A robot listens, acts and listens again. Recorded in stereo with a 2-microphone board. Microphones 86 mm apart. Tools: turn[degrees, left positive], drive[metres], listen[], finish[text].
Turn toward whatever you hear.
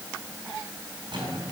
Thought: The drawer: about 70° right or 110° right.
Action: turn[-70]
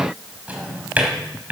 Thought: So it is at 20° right.
Action: turn[-20]
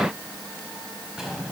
Action: finish[Found it: a drawer, straight ahead.]